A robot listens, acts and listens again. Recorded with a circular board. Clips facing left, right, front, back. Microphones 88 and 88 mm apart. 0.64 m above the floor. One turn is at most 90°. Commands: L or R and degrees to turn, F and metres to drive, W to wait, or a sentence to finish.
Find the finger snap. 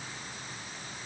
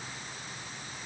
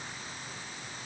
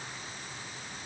W
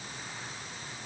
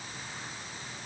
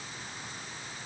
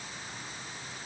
W
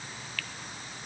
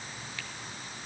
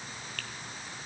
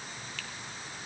R25
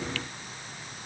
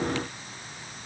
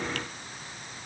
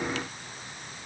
W
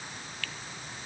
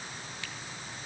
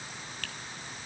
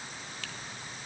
R25
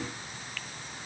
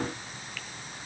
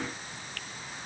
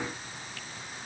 Facing the finger snap.